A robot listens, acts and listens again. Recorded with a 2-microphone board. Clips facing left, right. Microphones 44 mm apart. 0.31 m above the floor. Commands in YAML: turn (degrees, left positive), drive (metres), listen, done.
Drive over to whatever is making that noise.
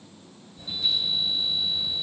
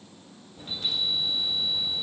turn: -55
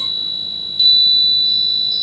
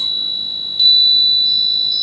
drive: 1.0
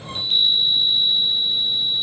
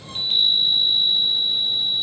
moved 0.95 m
drive: 1.0
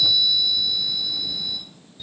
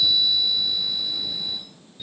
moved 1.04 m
turn: -10
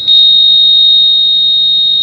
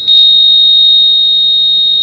drive: 1.0
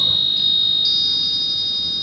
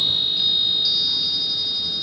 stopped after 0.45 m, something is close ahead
done: "Arrived at the chime, straight ahead."